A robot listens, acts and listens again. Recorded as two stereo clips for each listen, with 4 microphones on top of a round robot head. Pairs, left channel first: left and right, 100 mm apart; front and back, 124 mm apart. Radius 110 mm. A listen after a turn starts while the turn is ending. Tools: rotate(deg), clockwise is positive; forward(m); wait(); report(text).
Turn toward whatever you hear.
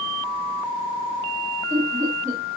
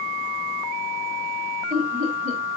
rotate(155)
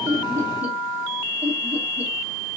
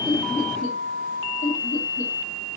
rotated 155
rotate(15)
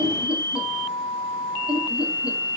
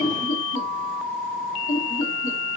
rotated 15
rotate(10)
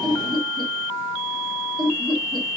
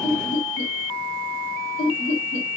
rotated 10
report("Facing the laughter.")